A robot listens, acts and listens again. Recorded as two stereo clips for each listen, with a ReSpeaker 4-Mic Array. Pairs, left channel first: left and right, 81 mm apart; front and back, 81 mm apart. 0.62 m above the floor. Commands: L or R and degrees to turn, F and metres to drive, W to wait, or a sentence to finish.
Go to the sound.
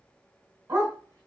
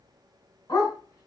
R45
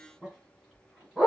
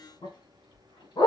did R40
F1.0
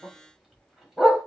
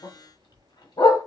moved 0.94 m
F1.0
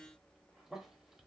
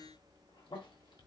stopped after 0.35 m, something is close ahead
W
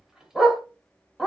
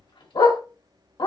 I am next to the dog barking.